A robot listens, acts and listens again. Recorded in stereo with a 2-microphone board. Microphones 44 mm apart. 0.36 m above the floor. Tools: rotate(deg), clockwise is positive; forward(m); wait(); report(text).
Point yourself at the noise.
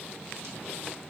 wait()
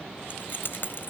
rotate(-55)
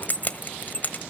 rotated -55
rotate(-50)
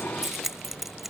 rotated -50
report("Found it: keys jangling, straight ahead.")